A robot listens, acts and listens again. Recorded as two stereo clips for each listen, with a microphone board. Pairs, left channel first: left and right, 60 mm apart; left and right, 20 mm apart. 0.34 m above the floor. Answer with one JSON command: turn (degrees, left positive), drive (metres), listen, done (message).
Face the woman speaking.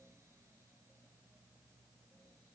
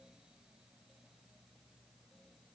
{"listen": true}
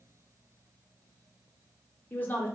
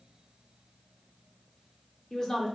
{"turn": 25}
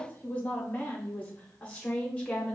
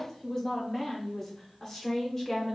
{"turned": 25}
{"turn": 15}
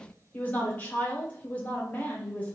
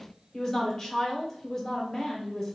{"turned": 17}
{"turn": 25}
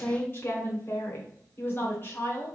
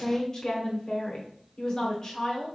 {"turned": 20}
{"turn": 30}
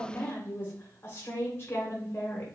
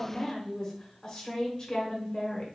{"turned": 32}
{"turn": 35}
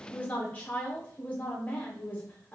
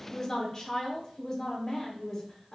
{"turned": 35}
{"turn": 20}
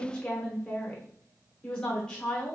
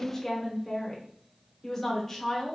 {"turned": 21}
{"turn": 10}
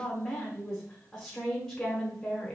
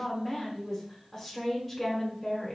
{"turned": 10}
{"done": "Found it: a woman speaking, straight ahead."}